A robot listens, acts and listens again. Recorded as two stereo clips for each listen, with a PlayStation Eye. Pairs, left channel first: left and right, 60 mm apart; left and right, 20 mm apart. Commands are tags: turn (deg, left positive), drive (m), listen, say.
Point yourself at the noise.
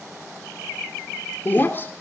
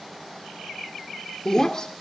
<turn deg="35"/>
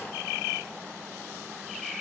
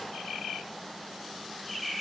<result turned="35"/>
<listen/>
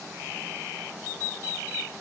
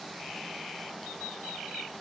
<say>I heard breaking glass, but can't make it out now. It was about straight ahead or 110° left.</say>